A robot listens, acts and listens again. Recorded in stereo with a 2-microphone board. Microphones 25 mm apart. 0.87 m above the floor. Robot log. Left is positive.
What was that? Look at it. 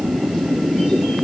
cmd idle
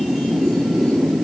cmd idle
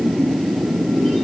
end: I can't make out anything.